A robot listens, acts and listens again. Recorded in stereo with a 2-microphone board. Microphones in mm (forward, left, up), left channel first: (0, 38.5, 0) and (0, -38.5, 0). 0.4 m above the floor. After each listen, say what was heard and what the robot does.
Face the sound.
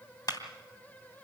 The clap: about 55° left or 125° left. Turn 55° left.
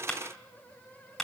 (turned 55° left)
Facing the clap, 2 to 4 m away.